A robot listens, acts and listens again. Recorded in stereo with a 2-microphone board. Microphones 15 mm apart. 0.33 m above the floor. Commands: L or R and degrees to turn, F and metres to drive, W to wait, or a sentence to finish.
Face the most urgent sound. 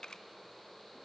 W
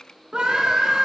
R70
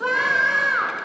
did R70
R25
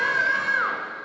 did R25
Found it: a scream, straight ahead, 2 to 4 m away.